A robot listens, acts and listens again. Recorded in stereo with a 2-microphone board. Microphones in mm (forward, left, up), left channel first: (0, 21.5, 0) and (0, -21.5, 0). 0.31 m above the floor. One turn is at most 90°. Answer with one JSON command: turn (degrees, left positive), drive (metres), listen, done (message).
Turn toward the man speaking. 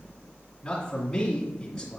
{"turn": 30}
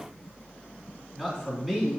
{"turn": -15}
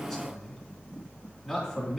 {"done": "Facing the man speaking."}